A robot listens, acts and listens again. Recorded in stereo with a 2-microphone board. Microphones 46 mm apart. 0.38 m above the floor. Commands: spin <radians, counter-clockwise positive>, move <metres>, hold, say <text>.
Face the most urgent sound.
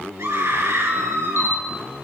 spin -1.57
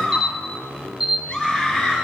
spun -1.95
spin 0.35
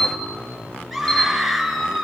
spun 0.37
say Found it: a scream, straight ahead, over 4 m away.